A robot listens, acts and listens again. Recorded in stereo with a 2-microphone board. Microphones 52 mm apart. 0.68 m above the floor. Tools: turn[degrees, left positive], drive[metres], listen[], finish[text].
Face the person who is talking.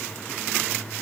Action: listen[]
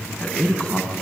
Thought: The man speaking: about 20° left or 160° left.
Action: turn[20]
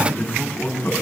Thought: So it is at 140° left.
Action: turn[140]
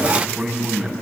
Thought: The man speaking is now 10° right.
Action: turn[-10]
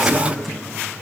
Action: listen[]
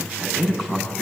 Action: finish[Found it: a man speaking, straight ahead.]